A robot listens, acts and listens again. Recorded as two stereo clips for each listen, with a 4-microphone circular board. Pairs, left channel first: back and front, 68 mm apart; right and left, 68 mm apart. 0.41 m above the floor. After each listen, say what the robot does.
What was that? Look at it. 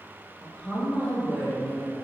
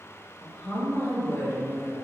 Turn 125° right.
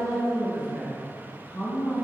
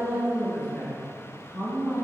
Turn 80° right.
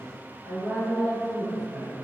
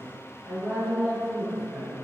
Found it: a woman speaking, straight ahead, 2 to 4 m away.